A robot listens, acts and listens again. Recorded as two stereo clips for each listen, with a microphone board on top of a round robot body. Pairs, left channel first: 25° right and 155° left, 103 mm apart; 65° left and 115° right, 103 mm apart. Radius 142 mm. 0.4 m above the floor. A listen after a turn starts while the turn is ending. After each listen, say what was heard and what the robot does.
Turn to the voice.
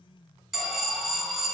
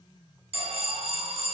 Keep listening.
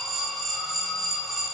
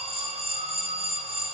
Keep listening.
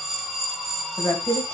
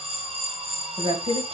The woman speaking: 85° right. Turn 85° right.
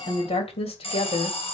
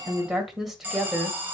The woman speaking is now 30° right. Turn 30° right.
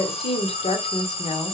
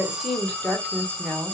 The woman speaking is now 15° right. Turn 15° right.
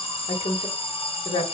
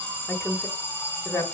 Facing the woman speaking.